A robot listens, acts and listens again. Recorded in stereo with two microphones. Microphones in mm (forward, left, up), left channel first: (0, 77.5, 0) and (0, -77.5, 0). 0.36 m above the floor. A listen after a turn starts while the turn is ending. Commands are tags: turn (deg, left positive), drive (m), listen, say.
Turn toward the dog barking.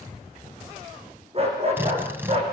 <turn deg="-40"/>
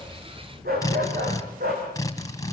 <turn deg="-100"/>
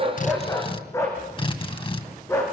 <turn deg="20"/>
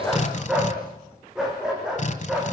<say>Facing the dog barking, over 4 m away.</say>